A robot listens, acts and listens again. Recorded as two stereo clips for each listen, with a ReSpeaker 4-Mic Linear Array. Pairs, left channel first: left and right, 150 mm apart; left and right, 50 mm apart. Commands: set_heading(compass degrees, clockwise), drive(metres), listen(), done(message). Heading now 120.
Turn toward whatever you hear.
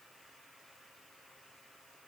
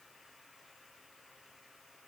listen()
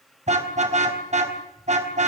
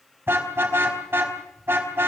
set_heading(170)
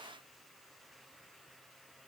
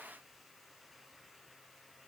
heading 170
listen()
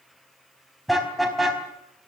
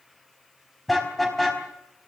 done("Found it: a car horn, straight ahead.")